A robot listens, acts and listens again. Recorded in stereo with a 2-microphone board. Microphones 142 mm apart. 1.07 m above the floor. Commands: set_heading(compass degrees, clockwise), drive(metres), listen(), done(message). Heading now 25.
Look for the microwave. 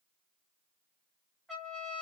listen()
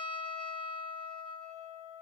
listen()
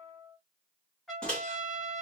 set_heading(355)
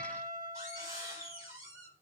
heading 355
set_heading(15)
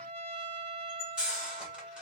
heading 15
done("Facing the microwave, 1 to 2 m away.")